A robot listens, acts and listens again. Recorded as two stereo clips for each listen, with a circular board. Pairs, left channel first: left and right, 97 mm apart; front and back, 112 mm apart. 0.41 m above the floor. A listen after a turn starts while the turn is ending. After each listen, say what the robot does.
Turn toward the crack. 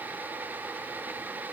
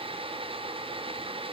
Keep listening.
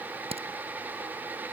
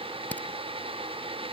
Turn 80° right.
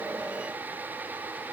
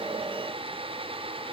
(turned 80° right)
I heard a crack from this way, but can't make it out now.